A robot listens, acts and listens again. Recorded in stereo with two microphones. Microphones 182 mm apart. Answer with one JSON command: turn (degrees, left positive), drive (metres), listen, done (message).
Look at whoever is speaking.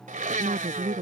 {"turn": -45}
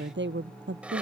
{"turn": -90}
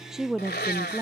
{"done": "Facing the woman speaking."}